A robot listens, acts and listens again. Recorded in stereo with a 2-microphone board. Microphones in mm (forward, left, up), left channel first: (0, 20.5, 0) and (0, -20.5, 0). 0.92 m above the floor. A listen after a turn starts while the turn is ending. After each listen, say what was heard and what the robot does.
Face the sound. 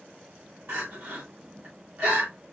The crying: about 60° right or 120° right. Turn 60° right.
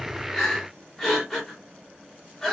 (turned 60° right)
Found it: crying, straight ahead, 2 to 4 m away.